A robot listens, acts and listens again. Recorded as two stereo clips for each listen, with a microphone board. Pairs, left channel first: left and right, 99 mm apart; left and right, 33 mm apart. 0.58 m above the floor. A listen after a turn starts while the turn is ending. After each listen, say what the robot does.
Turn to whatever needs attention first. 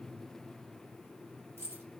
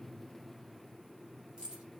Keep listening.
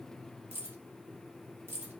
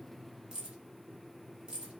Keep listening.
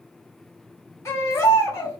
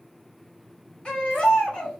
Turn 30° left.
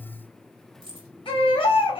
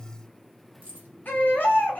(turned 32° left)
Turn 115° left.
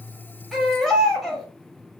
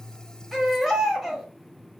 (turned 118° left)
Facing the baby crying.